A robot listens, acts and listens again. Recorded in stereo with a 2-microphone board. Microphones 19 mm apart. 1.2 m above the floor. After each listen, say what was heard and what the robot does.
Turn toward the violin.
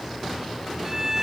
The violin: about 25° right or 155° right. Turn 25° right.
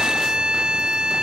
So it is at 125° right. Turn 125° right.
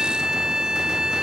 The violin is now 35° right. Turn 35° right.
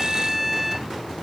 Found it: a violin, straight ahead.